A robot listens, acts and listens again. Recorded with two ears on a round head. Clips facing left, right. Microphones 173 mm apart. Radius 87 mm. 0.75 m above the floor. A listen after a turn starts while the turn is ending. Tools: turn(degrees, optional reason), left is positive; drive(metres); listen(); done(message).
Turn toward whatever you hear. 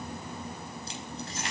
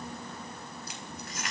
turn(degrees=25, reason="The keys jangling: about 25° left or 155° left.")
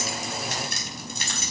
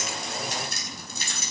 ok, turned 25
turn(degrees=125, reason="So it is at 125° left.")
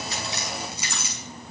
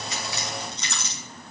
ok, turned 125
done("Found it: keys jangling, straight ahead.")